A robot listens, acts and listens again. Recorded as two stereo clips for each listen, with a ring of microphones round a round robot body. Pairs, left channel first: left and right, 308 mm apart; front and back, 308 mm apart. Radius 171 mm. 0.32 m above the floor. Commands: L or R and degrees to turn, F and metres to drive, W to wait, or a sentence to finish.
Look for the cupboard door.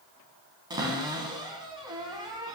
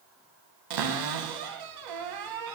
R170
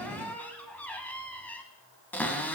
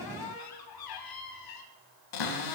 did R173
Found it: a cupboard door, straight ahead.